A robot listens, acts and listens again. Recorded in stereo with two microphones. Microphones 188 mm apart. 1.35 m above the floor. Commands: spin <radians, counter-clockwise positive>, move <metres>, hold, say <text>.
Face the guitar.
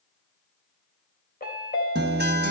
spin -1.05
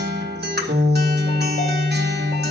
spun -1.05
spin -1.05
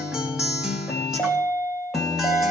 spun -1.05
say Found it: a guitar, straight ahead, 1 to 2 m away.